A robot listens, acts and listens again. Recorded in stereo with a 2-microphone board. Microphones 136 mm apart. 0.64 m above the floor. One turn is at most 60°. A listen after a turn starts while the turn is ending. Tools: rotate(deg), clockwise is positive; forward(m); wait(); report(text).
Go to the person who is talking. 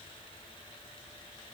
wait()
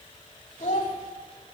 rotate(-60)
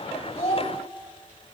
rotate(-50)
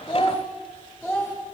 rotate(-20)
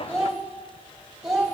forward(1.0)
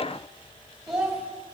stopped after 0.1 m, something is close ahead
report("Blocked. The child speaking is further on, straight ahead.")